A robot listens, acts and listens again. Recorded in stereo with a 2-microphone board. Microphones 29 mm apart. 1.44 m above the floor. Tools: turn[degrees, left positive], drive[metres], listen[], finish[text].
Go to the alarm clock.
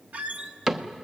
Action: listen[]
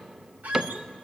Action: listen[]
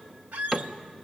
Action: finish[I can't make out an alarm clock, only a squeak and a cupboard door.]